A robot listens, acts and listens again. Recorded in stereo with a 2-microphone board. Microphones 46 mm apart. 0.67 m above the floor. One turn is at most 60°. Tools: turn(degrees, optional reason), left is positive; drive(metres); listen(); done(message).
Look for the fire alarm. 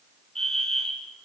turn(degrees=30)
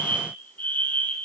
turn(degrees=60, reason="So it is at 135° left.")
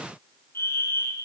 turn(degrees=60, reason="The fire alarm is now 75° left.")
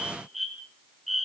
done("Found it: a fire alarm, straight ahead.")